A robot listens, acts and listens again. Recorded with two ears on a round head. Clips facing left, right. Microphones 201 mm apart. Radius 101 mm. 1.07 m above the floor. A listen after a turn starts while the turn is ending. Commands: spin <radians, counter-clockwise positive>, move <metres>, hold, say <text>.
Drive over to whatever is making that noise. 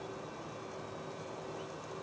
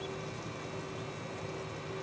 hold
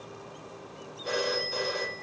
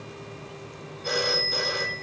spin -0.70
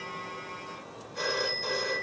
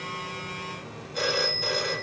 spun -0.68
spin -1.75
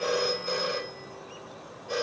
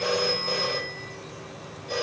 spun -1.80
move 1.0
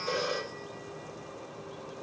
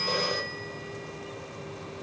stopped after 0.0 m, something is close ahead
say Blocked. The phone ringing is further on, straight ahead.